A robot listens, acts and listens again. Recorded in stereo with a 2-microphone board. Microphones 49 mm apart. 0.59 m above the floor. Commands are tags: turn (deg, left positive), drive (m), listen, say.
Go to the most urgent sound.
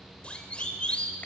<turn deg="25"/>
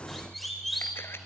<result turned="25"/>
<drive m="1.0"/>
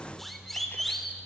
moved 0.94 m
<turn deg="10"/>
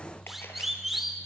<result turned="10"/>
<drive m="1.0"/>
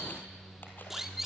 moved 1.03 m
<turn deg="-10"/>
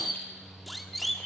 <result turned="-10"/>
<drive m="1.0"/>
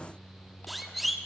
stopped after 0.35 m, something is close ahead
<say>Arrived at the siren, straight ahead.</say>